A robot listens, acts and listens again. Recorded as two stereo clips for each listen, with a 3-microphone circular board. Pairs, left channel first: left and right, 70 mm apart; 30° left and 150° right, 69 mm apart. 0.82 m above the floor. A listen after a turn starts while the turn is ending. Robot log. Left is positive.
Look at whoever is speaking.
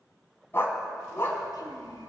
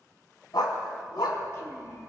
note: The child speaking: 80° left.
cmd yaw +80
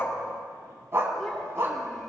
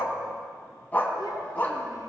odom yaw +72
end: Found it: a child speaking, straight ahead.